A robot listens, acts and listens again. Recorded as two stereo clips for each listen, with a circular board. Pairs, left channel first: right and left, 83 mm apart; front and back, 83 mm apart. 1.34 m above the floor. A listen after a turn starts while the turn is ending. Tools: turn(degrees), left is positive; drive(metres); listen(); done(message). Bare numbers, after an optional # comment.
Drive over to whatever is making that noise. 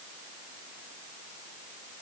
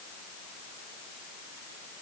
listen()
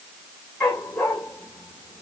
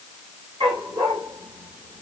# The dog barking: 170° right.
turn(-170)
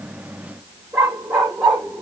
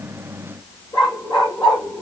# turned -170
drive(1.0)
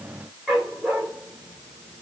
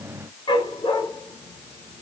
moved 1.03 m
drive(1.0)
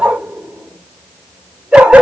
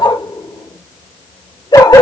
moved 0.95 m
# The dog barking is now 15° left.
turn(15)
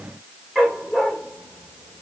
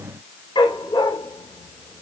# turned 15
drive(1.0)
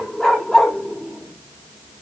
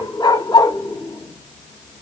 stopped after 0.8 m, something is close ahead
done("I am next to the dog barking.")